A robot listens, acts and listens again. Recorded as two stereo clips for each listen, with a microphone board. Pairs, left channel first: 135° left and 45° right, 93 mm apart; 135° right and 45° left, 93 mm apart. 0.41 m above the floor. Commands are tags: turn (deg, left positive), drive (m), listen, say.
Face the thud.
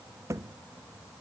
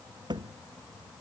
<turn deg="10"/>
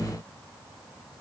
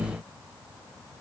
<say>I heard a thud from this way, but can't make it out now.</say>